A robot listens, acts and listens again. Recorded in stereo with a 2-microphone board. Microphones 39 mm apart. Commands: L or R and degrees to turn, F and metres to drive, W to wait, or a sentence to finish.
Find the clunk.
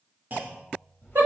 R45
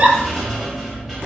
W
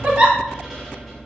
I heard a clunk, but can't make it out now. It was about straight ahead or 90° right.